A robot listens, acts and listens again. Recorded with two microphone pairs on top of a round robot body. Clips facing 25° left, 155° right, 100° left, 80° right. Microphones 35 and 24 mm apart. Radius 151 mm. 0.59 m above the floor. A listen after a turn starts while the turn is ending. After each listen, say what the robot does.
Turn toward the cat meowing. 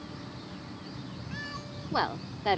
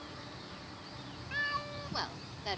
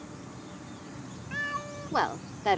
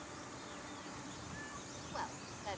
Turn 140° left.
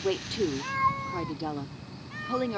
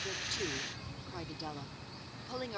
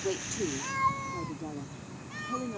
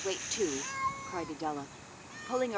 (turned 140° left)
Turn 35° left.
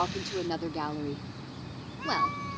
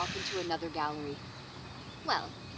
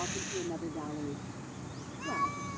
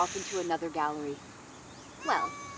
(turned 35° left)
Turn 10° left.
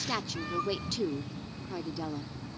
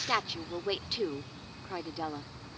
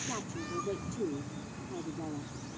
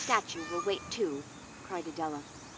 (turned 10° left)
Facing the cat meowing.